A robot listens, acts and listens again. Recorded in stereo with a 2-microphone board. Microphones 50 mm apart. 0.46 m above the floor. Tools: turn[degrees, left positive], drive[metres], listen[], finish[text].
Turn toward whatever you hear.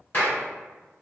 Thought: The clap: about 40° left or 140° left.
Action: turn[40]
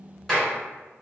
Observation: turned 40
Thought: So it is at 10° left.
Action: turn[10]
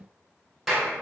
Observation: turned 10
Action: finish[Found it: a clap, straight ahead, 1 to 2 m away.]